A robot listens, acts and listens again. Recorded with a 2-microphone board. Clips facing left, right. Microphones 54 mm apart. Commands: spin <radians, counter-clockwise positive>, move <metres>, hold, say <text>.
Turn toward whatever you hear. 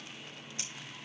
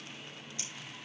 hold
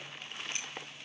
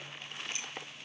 spin 0.61
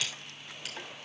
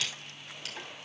say Found it: scissors, straight ahead.